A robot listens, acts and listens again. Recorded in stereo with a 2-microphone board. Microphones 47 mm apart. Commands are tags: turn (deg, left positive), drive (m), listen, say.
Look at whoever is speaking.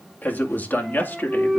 <turn deg="50"/>
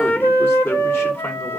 <turn deg="60"/>
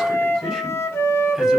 <listen/>
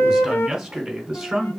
<say>Facing the man speaking, over 4 m away.</say>